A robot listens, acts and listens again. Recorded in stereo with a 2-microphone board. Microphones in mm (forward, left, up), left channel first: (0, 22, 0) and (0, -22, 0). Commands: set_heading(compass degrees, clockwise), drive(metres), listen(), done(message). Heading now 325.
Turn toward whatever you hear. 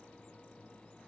listen()
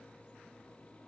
listen()
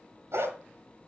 set_heading(35)
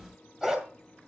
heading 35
set_heading(50)
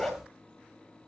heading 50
done("Facing the dog barking, 2 to 4 m away.")